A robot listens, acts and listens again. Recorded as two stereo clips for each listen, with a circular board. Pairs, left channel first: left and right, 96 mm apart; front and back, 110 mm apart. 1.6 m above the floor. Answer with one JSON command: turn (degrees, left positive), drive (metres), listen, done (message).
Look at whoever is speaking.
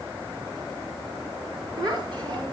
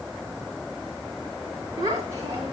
{"turn": -125}
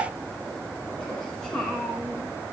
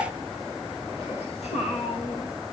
{"turn": 10}
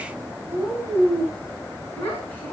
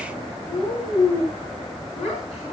{"turn": 15}
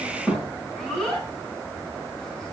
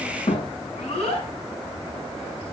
{"done": "Facing the child speaking."}